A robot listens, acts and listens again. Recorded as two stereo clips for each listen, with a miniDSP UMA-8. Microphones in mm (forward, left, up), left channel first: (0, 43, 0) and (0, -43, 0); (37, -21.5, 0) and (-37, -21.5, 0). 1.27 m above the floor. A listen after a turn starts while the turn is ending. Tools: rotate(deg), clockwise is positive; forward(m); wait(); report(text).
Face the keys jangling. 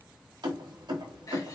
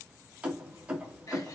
rotate(110)
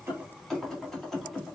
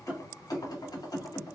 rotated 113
report("Facing the keys jangling, 1 to 2 m away.")